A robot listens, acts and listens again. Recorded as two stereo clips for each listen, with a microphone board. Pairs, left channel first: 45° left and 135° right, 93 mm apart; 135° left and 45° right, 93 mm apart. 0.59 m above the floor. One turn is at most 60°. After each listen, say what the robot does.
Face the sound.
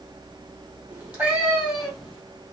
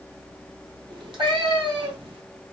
Turn 50° right.
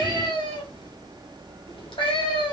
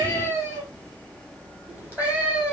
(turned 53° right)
Turn 30° left.
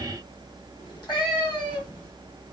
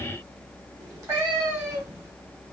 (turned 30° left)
Turn 10° left.
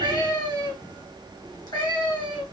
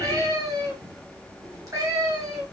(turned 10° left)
Found it: a cat meowing, straight ahead.